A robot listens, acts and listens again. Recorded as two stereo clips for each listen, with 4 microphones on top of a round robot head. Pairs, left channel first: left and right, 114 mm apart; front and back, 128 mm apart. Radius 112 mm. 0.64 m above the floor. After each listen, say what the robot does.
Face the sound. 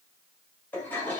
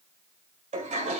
Turn 165° left.
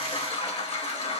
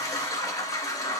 Turn 65° left.
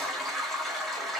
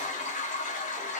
Facing the toilet flushing.